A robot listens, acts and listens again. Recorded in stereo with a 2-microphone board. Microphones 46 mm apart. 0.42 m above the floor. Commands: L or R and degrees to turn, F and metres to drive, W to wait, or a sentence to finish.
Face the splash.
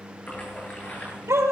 L30
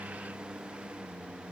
W
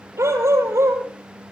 I heard a splash, but can't make it out now. It was about straight ahead or 120° left.